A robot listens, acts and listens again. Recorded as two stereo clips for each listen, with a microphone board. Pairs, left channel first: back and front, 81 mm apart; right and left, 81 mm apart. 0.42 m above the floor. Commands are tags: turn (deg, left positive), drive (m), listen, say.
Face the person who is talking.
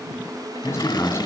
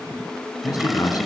<turn deg="-120"/>
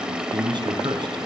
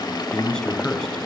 <turn deg="-10"/>
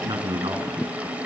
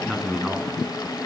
<say>Found it: a man speaking, straight ahead, 2 to 4 m away.</say>